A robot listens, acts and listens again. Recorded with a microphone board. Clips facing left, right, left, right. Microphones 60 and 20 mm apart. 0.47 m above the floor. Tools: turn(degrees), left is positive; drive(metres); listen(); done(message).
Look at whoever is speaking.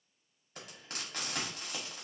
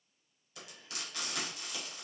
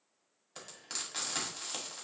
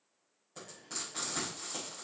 listen()
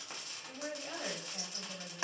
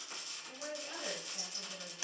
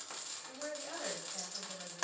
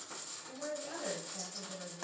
turn(degrees=25)
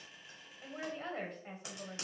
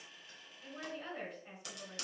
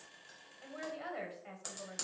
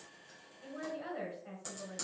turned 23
turn(degrees=130)
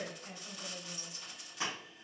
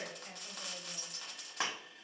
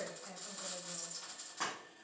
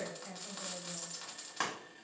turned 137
done("Found it: a woman speaking, straight ahead.")